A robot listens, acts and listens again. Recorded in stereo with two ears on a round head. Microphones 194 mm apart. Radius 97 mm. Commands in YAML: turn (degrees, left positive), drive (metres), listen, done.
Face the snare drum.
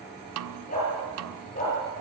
turn: -75
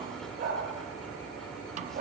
listen: true
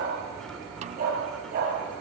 listen: true
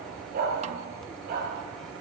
done: "I heard a snare drum, but can't make it out now. It was about straight ahead or 30° right."